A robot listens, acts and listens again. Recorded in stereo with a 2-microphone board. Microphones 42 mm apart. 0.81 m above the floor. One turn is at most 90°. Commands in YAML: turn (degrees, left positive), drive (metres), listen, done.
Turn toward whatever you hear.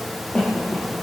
turn: 25
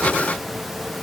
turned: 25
listen: true
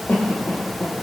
turn: 90
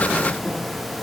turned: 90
turn: 45
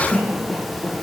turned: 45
done: "Facing the cough."